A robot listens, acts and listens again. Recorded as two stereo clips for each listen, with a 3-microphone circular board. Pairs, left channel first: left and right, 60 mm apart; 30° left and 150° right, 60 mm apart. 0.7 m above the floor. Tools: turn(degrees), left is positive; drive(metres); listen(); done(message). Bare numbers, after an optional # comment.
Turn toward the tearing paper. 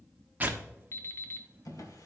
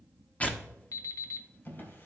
# The tearing paper: 35° right.
turn(-35)
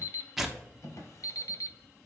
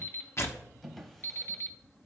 done("Found it: tearing paper, straight ahead.")